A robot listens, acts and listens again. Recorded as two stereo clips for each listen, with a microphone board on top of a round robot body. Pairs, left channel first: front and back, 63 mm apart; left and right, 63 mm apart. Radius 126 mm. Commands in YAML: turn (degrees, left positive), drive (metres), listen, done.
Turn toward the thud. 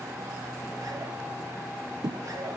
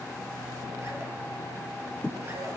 turn: 165
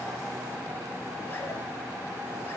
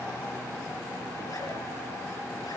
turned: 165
done: "I heard a thud from this way, but can't make it out now."